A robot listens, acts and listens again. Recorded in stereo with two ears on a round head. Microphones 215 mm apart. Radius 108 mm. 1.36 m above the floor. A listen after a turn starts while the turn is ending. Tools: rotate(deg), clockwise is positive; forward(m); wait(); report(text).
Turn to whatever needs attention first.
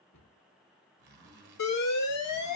rotate(-70)
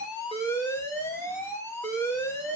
rotate(-10)
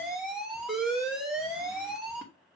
report("Found it: an alarm, straight ahead, 1 to 2 m away.")